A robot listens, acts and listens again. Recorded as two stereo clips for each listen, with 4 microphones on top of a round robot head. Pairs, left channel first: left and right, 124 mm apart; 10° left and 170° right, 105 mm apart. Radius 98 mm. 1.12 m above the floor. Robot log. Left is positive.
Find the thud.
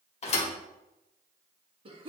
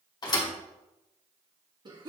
note: The thud: 60° left.
cmd yaw +60
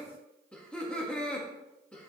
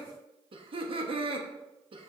end: I heard a thud from this way, but can't make it out now.